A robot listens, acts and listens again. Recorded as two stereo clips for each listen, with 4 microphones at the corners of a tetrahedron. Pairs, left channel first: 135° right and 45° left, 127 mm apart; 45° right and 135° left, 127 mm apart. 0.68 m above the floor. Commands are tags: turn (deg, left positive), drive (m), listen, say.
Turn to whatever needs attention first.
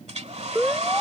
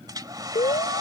<turn deg="-40"/>
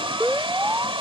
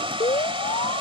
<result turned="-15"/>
<turn deg="-25"/>
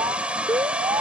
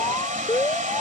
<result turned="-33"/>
<turn deg="10"/>
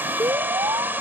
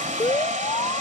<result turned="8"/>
<say>Found it: an alarm, straight ahead.</say>